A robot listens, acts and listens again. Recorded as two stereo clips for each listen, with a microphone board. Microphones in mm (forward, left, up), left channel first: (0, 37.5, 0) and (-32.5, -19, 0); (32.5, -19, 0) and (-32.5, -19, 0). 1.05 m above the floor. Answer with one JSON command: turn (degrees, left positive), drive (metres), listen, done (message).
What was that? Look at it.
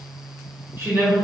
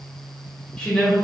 {"turn": -75}
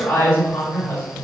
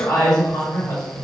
{"done": "Facing the woman speaking."}